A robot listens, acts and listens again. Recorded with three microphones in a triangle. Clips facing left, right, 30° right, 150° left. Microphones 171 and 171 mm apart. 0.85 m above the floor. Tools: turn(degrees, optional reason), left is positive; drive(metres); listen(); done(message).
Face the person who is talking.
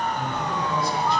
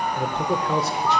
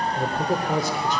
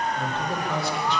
turn(degrees=-75, reason="The man speaking: 75° right.")
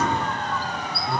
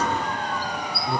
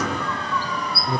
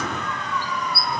turn(degrees=-25, reason="The man speaking is now 25° right.")
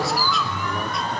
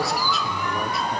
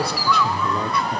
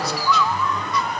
listen()
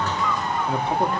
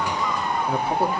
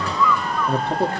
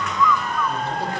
turn(degrees=-10, reason="The man speaking is now 10° right.")
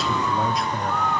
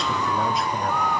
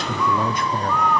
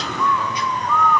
done("Found it: a man speaking, straight ahead, 1 to 2 m away.")